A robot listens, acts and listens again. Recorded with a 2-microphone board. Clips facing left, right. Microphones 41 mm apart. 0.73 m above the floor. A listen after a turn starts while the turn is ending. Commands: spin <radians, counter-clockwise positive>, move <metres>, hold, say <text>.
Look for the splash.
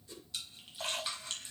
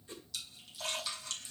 spin 0.52
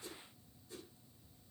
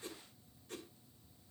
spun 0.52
hold
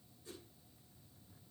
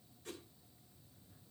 say I heard a splash, but can't make it out now. It was about straight ahead or 120° left.